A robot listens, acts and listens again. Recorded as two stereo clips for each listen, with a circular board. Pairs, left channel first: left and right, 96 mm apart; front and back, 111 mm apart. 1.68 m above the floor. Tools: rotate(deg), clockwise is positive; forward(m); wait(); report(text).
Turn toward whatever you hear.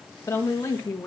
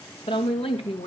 rotate(-30)
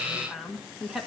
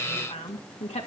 report("Found it: a woman speaking, straight ahead, 2 to 4 m away.")